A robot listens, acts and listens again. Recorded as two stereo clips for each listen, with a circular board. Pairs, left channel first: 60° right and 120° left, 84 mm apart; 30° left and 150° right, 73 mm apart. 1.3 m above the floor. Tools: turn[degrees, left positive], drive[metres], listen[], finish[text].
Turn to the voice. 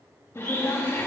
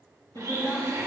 Thought: The woman speaking: 10° right.
Action: turn[-10]
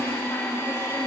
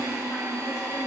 Thought: The woman speaking is now 10° right.
Action: turn[-10]
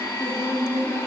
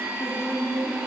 Action: finish[Facing the woman speaking, 2 to 4 m away.]